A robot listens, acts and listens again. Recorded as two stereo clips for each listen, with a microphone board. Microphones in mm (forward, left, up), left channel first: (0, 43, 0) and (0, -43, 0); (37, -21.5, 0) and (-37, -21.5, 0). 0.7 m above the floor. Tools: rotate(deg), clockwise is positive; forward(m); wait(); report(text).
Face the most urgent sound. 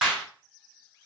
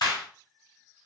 wait()
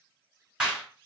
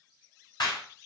wait()
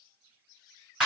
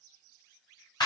report("I can't make out anything urgent to turn to.")